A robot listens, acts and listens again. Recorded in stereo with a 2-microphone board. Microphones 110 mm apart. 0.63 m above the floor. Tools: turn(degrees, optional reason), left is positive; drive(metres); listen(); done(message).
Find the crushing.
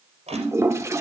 turn(degrees=-90)
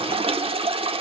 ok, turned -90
listen()
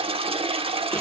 listen()
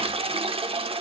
done("I heard crushing from this way, but can't make it out now.")